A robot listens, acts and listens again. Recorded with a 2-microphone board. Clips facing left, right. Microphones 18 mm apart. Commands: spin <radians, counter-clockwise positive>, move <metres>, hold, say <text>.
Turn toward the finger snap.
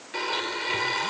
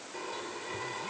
hold
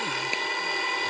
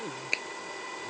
spin -0.52
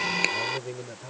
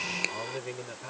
spin 0.35
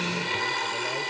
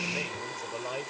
hold
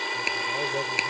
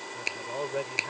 say Found it: a finger snap, straight ahead.